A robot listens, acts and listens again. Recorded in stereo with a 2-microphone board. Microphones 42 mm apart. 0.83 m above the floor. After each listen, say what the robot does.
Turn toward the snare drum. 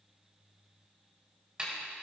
Turn 25° right.
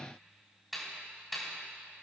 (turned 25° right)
Found it: a snare drum, straight ahead, 2 to 4 m away.